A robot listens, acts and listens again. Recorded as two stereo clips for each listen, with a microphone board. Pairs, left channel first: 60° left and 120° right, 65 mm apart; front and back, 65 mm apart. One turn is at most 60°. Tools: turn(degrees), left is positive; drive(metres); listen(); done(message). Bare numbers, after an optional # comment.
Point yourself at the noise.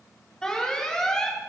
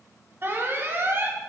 # The alarm: 135° left.
turn(60)
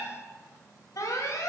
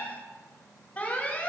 # The alarm is now 60° left.
turn(60)
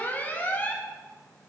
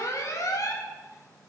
done("Found it: an alarm, straight ahead, 1 to 2 m away.")